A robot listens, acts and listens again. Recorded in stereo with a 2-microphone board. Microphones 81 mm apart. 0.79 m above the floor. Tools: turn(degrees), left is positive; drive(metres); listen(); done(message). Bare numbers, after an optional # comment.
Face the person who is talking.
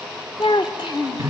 turn(90)
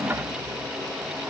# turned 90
listen()
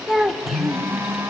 done("Facing the child speaking, 1 to 2 m away.")